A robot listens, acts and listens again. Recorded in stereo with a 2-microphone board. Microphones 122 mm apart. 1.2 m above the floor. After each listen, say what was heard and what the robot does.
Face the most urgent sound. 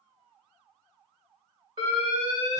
The alarm: about 45° right or 135° right. Turn 45° right.
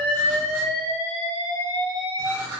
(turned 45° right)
So it is at 90° right. Turn 90° right.
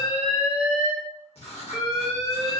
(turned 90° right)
Found it: an alarm, straight ahead, 1 to 2 m away.